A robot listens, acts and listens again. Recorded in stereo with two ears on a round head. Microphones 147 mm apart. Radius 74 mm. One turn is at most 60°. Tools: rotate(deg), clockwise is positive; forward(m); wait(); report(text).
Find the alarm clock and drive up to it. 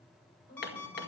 rotate(-30)
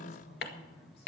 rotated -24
wait()
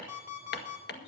rotate(15)
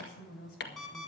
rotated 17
forward(1.0)
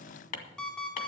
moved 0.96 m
forward(1.0)
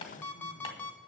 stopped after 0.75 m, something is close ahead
rotate(-15)
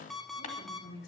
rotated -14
report("I am next to the alarm clock.")